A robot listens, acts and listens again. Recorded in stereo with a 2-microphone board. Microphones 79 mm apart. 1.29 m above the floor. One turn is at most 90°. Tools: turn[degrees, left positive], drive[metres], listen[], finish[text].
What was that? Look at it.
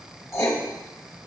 Thought: The writing: about 40° left or 140° left.
Action: turn[40]
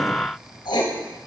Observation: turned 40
Thought: So it is at 100° left.
Action: turn[90]
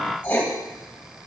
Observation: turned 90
Thought: The writing is now 20° left.
Action: turn[20]
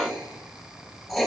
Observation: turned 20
Action: finish[Facing the writing.]